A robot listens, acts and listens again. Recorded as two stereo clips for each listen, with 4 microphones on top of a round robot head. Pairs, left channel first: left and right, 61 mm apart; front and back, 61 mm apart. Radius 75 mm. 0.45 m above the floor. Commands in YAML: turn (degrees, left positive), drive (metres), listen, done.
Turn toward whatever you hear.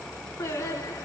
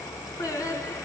turn: 35
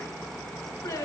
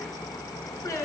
turn: 35
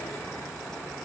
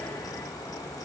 listen: true
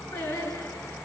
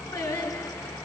turn: 25
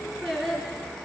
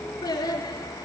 done: "Found it: singing, straight ahead, 2 to 4 m away."